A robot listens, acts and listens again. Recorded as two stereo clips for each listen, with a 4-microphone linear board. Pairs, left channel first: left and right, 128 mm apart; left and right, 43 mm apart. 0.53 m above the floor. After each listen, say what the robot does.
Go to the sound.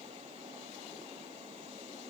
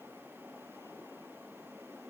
Keep listening.
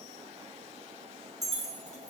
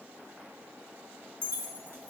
Turn 70° right.
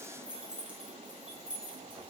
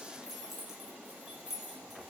Turn 10° right.
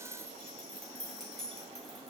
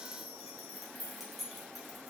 Drive 1.0 m forward.
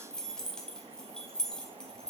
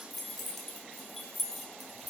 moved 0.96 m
Drive 1.0 m forward.
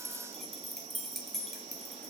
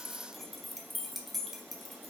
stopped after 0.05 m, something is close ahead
I am next to the keys jangling.